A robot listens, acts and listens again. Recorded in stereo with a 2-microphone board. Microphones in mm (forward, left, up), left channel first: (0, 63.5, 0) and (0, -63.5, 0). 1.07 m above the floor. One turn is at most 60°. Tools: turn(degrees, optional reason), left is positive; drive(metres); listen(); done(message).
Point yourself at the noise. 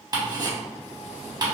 turn(degrees=-35, reason="The ticking: about 35° right or 145° right.")
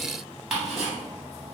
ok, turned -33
done("Found it: ticking, straight ahead.")